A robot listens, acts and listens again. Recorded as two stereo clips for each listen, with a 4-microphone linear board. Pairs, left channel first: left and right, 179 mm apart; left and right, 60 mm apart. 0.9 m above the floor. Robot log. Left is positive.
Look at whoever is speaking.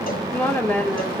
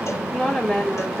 cmd yaw +30
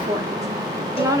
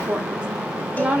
note: So it is at 20° right.
cmd yaw -20
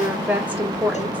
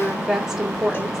note: The woman speaking is now 10° right.
cmd yaw -10
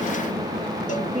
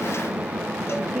end: Facing the woman speaking.